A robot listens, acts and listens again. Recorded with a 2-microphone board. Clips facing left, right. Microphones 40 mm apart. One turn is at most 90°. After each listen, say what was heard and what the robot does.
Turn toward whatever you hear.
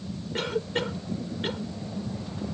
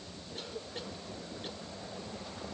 Turn 90° left.
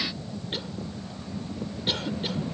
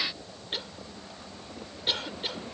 Found it: a cough, straight ahead.